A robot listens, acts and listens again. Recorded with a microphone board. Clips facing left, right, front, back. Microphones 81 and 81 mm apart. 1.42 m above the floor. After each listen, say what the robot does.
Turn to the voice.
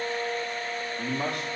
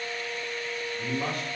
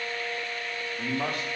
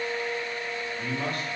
Turn 70° left.
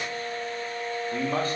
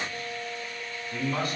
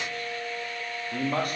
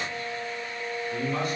Turn 35° left.
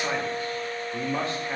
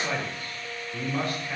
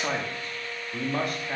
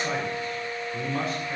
Turn 30° left.
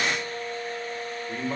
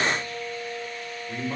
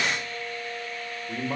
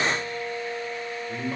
Turn 15° left.
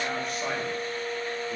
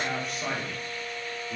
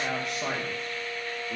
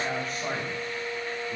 Found it: a man speaking, straight ahead, 2 to 4 m away.